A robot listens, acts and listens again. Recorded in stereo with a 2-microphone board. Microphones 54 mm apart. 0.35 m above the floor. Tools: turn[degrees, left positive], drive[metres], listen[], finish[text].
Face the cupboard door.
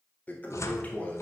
Thought: The cupboard door: about 70° left or 110° left.
Action: turn[70]
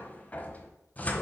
Thought: So it is at 30° left.
Action: turn[30]
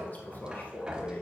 Thought: The cupboard door is now 15° right.
Action: turn[-15]
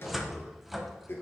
Action: finish[Facing the cupboard door.]